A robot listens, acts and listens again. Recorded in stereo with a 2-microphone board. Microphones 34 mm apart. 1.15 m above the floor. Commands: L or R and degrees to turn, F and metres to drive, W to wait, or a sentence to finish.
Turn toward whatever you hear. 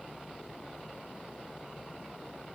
W
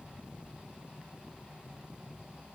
W
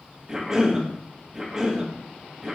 R15
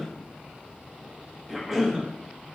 Facing the cough, 1 to 2 m away.